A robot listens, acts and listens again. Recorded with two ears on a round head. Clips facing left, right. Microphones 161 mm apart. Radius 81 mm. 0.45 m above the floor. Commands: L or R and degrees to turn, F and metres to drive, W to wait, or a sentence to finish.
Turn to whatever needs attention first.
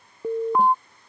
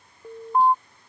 L60
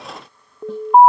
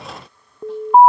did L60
Facing the alarm.